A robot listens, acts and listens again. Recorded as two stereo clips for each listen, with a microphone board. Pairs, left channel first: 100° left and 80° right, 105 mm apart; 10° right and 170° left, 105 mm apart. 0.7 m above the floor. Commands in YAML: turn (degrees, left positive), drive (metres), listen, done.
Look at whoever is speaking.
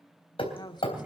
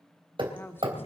turn: 55
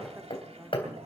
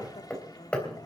listen: true
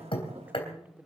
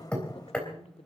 done: "Facing the woman speaking, 1 to 2 m away."